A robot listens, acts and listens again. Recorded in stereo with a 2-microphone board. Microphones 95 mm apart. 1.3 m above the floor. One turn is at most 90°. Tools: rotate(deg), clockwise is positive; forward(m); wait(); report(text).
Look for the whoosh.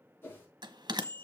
rotate(-25)
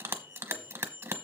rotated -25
wait()
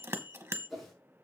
report("Facing the whoosh, over 4 m away.")